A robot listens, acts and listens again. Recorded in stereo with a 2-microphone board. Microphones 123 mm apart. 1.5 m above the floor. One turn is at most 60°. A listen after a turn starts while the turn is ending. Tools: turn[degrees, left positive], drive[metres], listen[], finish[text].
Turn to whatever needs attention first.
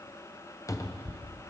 Action: listen[]
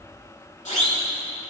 Action: turn[60]
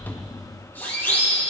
Thought: So it is at 20° left.
Action: turn[20]
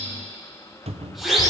Action: finish[Facing the siren, over 4 m away.]